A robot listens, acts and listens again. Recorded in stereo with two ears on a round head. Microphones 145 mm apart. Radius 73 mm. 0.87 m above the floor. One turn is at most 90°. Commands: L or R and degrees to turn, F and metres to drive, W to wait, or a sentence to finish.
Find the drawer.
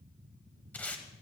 W
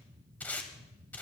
W
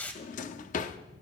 L50
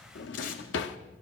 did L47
L80
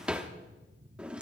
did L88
Found it: a drawer, straight ahead, under 1 m away.